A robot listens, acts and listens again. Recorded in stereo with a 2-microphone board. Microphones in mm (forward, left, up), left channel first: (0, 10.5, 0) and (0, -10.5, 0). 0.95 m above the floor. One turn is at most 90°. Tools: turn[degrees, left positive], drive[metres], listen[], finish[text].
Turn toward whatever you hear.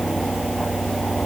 Action: listen[]
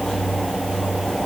Action: listen[]
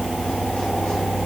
Action: finish[I can't make out anything.]